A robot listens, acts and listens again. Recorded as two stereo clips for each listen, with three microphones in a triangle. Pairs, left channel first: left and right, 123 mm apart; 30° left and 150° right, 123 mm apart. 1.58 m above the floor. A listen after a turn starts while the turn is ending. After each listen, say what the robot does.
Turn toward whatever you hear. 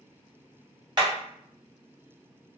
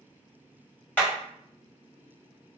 Turn 45° right.
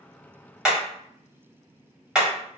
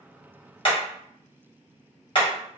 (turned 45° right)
Found it: hammering, straight ahead, 1 to 2 m away.